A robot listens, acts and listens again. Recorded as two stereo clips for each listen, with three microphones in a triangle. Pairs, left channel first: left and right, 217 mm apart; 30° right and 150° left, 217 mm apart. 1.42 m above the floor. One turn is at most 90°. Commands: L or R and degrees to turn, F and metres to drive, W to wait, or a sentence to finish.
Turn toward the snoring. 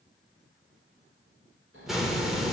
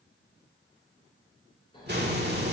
R90
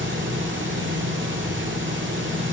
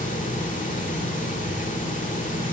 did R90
W
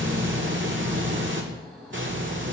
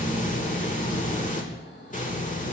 Facing the snoring.